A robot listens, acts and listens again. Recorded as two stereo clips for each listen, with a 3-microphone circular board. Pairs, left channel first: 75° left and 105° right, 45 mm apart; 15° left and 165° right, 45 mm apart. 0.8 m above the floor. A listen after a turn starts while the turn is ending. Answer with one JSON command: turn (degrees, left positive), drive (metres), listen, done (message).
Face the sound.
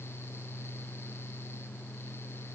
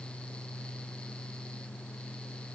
{"listen": true}
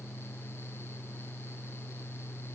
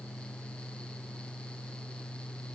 {"listen": true}
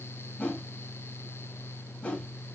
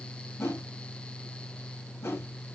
{"turn": 15}
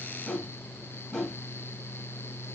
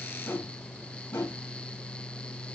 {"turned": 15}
{"done": "Facing the whoosh."}